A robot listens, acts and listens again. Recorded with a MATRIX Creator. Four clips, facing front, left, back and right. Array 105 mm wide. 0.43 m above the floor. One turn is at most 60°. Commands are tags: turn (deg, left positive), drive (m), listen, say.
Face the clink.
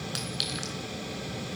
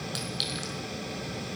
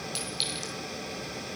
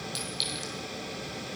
<turn deg="25"/>
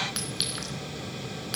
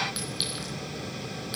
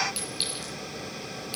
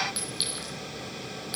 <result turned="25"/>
<say>Facing the clink.</say>